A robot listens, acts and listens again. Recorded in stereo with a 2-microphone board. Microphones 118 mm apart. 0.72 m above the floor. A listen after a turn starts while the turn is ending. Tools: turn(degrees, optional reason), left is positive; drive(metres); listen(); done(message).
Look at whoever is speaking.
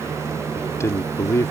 turn(degrees=25, reason="The man speaking: about 25° left or 155° left.")
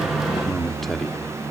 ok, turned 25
done("Found it: a man speaking, straight ahead.")